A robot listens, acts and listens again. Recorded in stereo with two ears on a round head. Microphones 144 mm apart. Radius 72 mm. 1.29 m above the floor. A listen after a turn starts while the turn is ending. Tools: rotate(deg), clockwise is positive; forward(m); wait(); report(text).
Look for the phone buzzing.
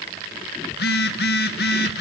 rotate(-70)
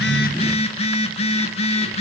rotate(-40)
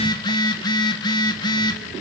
rotate(-25)
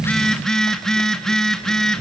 report("Found it: a phone buzzing, straight ahead, 1 to 2 m away.")